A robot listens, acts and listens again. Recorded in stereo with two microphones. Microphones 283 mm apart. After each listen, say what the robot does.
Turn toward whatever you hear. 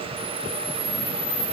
Turn 70° left.
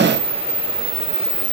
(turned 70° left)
Turn 30° left.
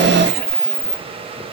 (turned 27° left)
Facing the camera shutter, over 4 m away.